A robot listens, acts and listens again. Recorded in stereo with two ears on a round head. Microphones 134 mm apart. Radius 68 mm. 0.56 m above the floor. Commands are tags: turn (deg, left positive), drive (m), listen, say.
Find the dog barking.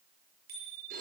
<listen/>
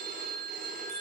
<listen/>
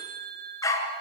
<turn deg="20"/>
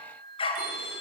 <turn deg="40"/>
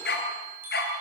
<turn deg="105"/>
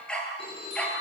<say>Found it: a dog barking, straight ahead, over 4 m away.</say>